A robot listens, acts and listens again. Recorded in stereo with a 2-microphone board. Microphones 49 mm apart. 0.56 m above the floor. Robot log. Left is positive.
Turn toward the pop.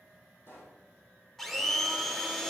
note: The pop: about 50° left or 130° left.
cmd yaw +50
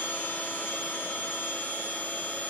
cmd idle
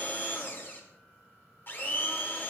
end: I heard a pop, but can't make it out now. It was about straight ahead or 80° left.